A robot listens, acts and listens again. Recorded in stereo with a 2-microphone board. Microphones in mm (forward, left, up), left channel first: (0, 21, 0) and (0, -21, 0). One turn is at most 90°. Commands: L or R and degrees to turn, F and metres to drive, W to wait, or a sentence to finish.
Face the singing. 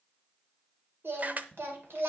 R75
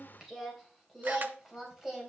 R10
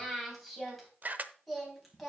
Found it: singing, straight ahead.